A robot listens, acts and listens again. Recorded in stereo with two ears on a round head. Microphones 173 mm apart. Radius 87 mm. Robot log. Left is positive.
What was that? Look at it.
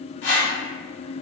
note: The whoosh: about 60° left or 120° left.
cmd yaw +60
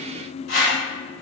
note: So it is at 55° left.
cmd yaw +55
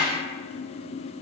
cmd idle
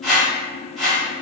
end: Found it: a whoosh, straight ahead.